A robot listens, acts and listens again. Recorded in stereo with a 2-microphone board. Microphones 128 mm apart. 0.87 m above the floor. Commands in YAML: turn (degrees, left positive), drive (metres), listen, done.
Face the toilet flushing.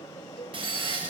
turn: -45
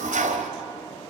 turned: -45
turn: -95
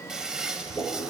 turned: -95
done: "Facing the toilet flushing."